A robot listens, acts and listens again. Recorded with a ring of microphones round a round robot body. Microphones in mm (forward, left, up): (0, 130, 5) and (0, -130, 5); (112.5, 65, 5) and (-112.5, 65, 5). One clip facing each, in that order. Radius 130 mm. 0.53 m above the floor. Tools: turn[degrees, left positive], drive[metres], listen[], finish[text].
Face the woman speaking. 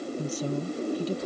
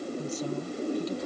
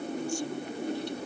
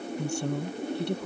Thought: The woman speaking: 150° left.
Action: turn[150]
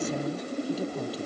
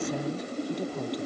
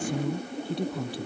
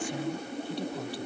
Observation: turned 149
Action: finish[Facing the woman speaking.]